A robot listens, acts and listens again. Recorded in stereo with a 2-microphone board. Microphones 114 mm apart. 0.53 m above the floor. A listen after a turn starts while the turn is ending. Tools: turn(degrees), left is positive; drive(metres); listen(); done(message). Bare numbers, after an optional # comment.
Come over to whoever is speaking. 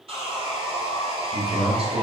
# The man speaking: about 60° right or 120° right.
turn(-60)
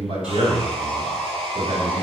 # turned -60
# So it is at 45° right.
turn(-45)
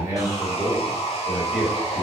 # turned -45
drive(1.0)
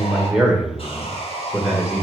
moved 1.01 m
# The man speaking is now 10° right.
turn(-10)
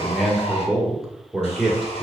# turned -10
drive(1.0)
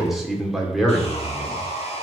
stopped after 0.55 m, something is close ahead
done("I am next to the man speaking.")